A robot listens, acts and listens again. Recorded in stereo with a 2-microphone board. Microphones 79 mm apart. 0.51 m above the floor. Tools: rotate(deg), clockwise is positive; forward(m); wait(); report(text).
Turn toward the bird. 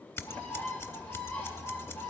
rotate(-20)
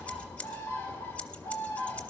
rotate(-140)
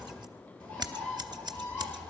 rotate(-20)
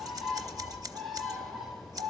report("Found it: a bird, straight ahead, 2 to 4 m away.")